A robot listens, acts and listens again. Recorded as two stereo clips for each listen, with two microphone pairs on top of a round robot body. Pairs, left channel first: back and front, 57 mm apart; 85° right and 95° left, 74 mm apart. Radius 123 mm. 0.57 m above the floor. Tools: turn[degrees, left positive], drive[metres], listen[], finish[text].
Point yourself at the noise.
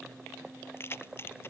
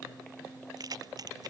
Thought: The keys jangling: 130° left.
Action: turn[130]
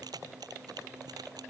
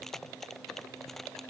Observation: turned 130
Action: listen[]
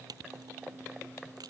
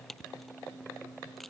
Action: finish[Found it: keys jangling, straight ahead.]